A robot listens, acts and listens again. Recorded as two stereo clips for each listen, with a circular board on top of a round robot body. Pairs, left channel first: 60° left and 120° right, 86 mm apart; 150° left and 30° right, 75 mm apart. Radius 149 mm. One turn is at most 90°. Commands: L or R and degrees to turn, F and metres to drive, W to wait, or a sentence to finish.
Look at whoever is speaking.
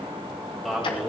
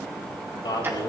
L90
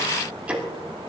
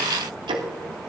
L60
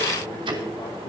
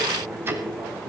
W
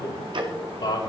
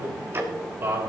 L25
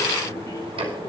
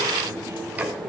W
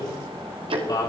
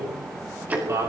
L15
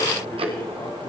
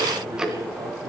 W
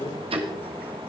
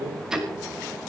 Facing the man speaking, over 4 m away.